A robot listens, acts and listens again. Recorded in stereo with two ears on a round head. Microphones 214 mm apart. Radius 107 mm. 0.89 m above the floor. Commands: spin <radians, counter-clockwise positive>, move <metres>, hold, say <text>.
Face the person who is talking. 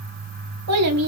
spin -1.31
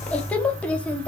say Found it: a child speaking, straight ahead, under 1 m away.